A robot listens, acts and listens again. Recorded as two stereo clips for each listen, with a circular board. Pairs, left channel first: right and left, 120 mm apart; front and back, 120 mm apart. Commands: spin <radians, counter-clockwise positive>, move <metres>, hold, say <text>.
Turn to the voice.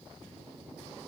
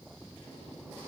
hold
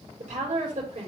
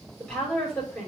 spin 1.40
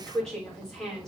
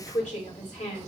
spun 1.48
say Found it: a woman speaking, straight ahead.